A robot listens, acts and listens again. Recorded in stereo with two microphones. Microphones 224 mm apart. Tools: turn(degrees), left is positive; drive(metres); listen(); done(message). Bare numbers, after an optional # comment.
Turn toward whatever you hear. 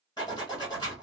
# The zipper: about 20° left or 160° left.
turn(20)
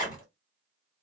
# So it is at 140° left.
turn(140)
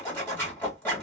# The zipper is now 10° left.
turn(10)
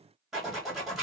done("Found it: a zipper, straight ahead, 1 to 2 m away.")